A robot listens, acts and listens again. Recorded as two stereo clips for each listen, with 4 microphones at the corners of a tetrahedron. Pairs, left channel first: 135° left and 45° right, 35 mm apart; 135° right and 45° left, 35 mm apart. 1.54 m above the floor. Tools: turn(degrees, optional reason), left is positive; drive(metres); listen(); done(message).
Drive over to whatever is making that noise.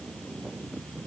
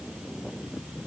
listen()
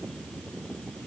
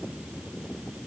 listen()
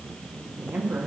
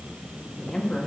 turn(degrees=-70, reason="The woman speaking: 70° right.")
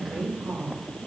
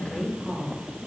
turn(degrees=-20, reason="The woman speaking is now 20° right.")
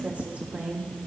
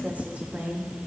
drive(metres=1.0)
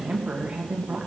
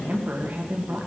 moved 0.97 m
turn(degrees=10, reason="The woman speaking is now 10° left.")
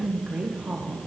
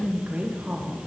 drive(metres=1.0)
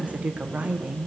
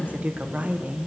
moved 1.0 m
drive(metres=1.0)
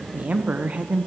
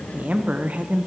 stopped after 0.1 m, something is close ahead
done("Arrived at the woman speaking, straight ahead.")